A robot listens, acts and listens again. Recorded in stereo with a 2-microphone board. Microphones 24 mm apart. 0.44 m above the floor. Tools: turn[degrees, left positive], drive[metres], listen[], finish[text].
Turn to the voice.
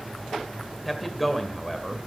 Action: turn[30]
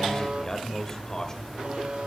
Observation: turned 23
Thought: So it is at 150° left.
Action: turn[150]
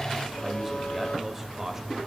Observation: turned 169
Thought: The man speaking is now 15° right.
Action: turn[-15]
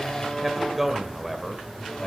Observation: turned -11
Action: finish[Found it: a man speaking, straight ahead, 1 to 2 m away.]